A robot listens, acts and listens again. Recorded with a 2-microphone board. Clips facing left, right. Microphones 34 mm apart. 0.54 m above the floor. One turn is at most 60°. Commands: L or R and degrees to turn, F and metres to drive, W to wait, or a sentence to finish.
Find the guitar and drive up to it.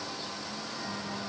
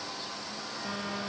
W
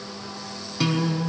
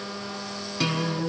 L30
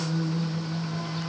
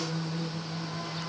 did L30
L60
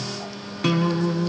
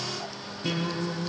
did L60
L60
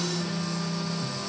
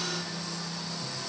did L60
L35
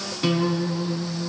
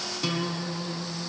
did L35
L15
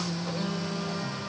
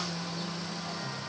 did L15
F1.0
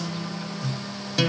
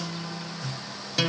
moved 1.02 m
F1.0
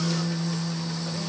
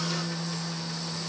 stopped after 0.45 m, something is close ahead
Arrived at the guitar, straight ahead.